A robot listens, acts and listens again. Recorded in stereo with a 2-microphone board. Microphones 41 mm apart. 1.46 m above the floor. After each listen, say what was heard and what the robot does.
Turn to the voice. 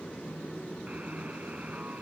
Keep listening.
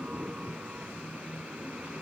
Keep listening.
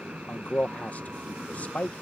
The man speaking: about 35° left or 145° left. Turn 35° left.
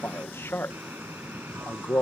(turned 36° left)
So it is at 105° left. Turn 105° left.
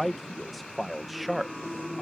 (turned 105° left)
Facing the man speaking.